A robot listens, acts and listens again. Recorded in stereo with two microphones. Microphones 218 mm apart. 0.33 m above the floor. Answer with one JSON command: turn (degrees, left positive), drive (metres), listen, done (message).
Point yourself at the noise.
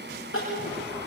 {"turn": 70}
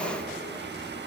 {"listen": true}
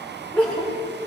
{"done": "Facing the crying."}